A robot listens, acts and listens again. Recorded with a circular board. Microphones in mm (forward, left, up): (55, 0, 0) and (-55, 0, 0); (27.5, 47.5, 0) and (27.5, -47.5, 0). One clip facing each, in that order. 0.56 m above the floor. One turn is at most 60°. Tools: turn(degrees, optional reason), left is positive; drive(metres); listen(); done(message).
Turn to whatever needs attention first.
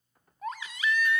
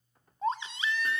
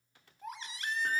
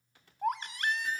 turn(degrees=-60, reason="The baby crying: 120° right.")
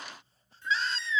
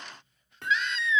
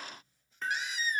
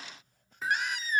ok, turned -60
turn(degrees=-55, reason="The baby crying is now 55° right.")
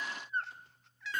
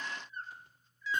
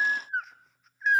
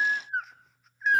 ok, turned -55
done("Found it: a baby crying, straight ahead.")